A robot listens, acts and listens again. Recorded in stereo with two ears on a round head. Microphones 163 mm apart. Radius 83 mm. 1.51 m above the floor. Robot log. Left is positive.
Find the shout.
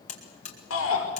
cmd yaw +90
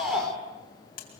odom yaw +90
end: Found it: a shout, straight ahead.